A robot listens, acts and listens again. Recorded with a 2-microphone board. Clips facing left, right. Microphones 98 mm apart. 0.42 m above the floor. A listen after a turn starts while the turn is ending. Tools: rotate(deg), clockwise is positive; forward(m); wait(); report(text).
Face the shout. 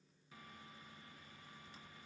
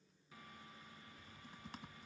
wait()
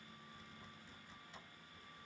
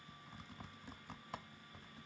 wait()
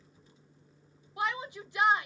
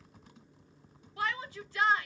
rotate(-20)
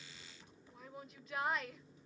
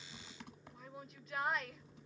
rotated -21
report("Facing the shout.")